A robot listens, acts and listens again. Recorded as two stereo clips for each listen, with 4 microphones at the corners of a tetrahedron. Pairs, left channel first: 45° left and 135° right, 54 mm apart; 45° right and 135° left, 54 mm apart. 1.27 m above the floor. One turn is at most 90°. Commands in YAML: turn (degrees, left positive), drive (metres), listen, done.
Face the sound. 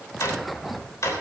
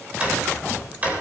turn: 70
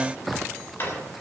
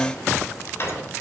done: "Found it: a drawer, straight ahead, 2 to 4 m away."